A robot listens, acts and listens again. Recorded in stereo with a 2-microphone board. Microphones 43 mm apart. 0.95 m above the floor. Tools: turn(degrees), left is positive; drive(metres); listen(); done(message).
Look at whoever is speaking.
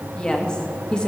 turn(degrees=20)
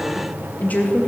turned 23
turn(degrees=135)
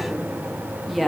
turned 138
done("Found it: a woman speaking, straight ahead.")